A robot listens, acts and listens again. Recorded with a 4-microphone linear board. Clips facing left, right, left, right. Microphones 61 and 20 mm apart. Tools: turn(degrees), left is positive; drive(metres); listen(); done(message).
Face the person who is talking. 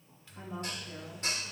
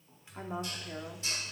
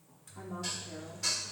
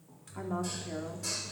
turn(degrees=-45)
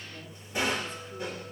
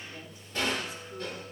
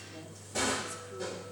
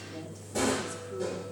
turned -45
listen()
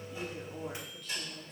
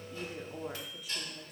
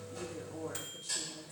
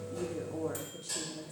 turn(degrees=-10)
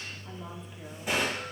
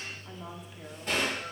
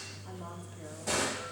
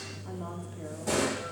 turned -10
listen()
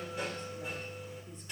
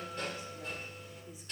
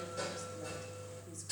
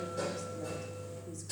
listen()
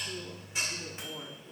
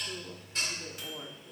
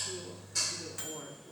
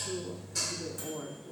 done("Found it: a woman speaking, straight ahead.")